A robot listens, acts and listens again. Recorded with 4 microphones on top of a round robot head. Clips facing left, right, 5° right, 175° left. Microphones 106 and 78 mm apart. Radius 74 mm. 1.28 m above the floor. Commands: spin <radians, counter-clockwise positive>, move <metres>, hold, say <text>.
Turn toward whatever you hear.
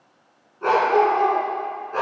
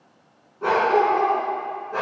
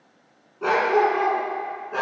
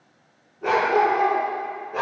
say Found it: a dog barking, straight ahead, over 4 m away.